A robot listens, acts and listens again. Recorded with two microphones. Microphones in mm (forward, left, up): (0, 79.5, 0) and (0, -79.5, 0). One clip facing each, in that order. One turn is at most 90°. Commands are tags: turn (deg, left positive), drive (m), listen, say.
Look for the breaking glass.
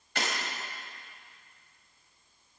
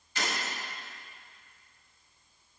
<turn deg="70"/>
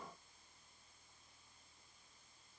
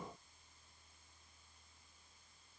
<listen/>
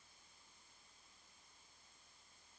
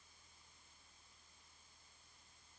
<say>I heard breaking glass, but can't make it out now. It was about straight ahead or 40° left.</say>